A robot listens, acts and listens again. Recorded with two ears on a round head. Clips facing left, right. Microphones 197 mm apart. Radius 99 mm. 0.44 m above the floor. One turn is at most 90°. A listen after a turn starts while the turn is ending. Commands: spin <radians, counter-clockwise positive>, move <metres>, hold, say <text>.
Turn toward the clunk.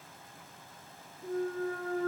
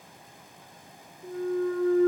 spin 0.70
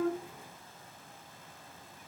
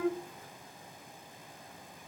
hold
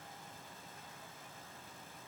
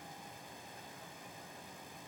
say I heard a clunk, but can't make it out now. It was about straight ahead or 100° left.